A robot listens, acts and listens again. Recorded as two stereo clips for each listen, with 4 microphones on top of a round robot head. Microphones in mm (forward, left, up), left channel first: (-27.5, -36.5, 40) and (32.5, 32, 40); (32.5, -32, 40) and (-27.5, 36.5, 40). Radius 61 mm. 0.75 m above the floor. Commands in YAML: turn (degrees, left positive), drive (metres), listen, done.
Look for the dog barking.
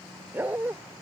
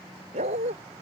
turn: 120
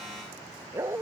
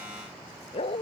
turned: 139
turn: -15
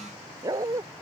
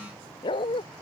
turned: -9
turn: -10
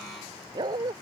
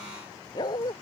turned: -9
done: "Facing the dog barking."